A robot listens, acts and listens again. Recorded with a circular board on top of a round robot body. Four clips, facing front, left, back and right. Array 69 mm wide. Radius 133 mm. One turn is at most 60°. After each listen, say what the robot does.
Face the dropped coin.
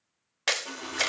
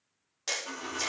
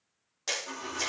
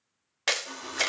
Turn 20° left.
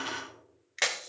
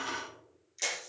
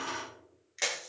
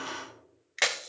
Found it: a dropped coin, straight ahead.